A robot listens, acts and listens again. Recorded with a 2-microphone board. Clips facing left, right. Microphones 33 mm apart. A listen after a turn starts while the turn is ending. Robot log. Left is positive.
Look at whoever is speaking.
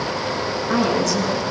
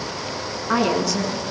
note: The woman speaking: about 20° right or 160° right.
cmd yaw -20
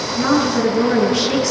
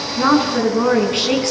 note: So it is at 140° right.
cmd yaw -140
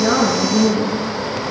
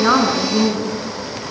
note: The woman speaking is now 50° right.
cmd yaw -50
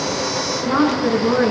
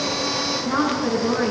note: The woman speaking is now 10° left.
cmd yaw +10
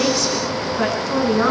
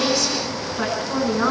end: Found it: a woman speaking, straight ahead.